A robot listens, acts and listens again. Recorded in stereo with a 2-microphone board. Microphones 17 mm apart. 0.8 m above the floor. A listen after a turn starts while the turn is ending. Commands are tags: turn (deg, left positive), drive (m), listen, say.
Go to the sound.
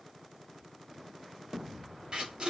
<turn deg="-45"/>
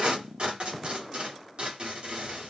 <turn deg="-85"/>
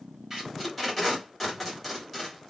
<drive m="1.0"/>
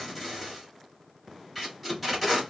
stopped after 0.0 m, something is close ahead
<say>Blocked. The tape being pulled is further on, straight ahead.</say>